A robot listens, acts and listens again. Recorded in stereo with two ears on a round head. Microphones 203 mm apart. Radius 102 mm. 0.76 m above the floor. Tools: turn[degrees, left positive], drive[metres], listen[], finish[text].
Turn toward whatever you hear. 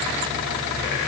Action: listen[]
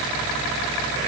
Action: listen[]
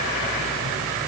Action: finish[I can't make out anything.]